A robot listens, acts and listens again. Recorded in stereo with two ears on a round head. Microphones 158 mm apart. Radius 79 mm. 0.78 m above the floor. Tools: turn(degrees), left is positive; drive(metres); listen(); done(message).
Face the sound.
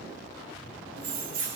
turn(degrees=-55)
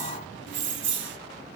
turn(degrees=-75)
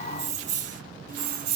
turn(degrees=-60)
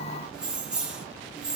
done("Found it: keys jangling, straight ahead.")